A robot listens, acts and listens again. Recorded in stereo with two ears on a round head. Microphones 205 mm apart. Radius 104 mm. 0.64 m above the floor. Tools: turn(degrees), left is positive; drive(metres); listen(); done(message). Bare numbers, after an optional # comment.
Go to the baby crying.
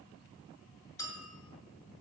listen()
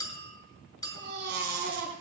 # The baby crying: about 55° right or 125° right.
turn(-55)
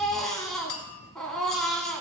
drive(1.0)
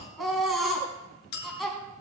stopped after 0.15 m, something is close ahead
done("Blocked. The baby crying is further on, straight ahead.")